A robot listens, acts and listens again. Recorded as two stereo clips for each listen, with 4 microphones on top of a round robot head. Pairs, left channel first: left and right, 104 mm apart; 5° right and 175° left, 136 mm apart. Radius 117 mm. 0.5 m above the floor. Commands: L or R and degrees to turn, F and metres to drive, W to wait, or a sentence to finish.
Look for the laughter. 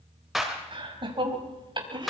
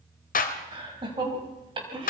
R130
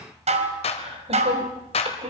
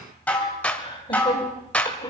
R70
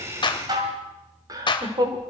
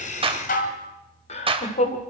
R35
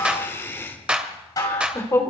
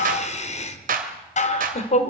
L25
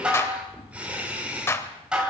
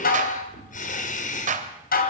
R10
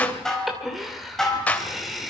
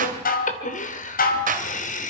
Facing the laughter.